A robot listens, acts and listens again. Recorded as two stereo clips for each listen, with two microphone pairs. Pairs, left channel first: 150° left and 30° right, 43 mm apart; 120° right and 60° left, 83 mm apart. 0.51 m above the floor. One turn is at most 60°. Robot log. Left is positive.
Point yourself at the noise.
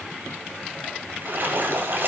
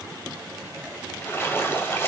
note: The splash: 60° right.
cmd yaw -60
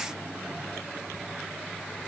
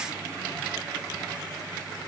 end: I heard a splash from this way, but can't make it out now.